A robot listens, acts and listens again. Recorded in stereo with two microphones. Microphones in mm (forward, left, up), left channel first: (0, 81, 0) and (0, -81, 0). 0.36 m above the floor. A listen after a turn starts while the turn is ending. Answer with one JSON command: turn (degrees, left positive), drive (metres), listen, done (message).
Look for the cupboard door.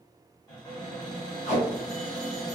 {"turn": 25}
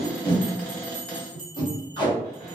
{"turn": 10}
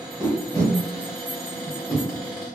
{"done": "Found it: a cupboard door, straight ahead."}